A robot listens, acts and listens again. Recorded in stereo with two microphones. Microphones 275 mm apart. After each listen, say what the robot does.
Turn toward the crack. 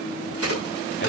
Turn 60° right.
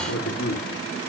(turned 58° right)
Keep listening.
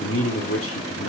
I heard a crack, but can't make it out now. It was about 5° right or 60° right.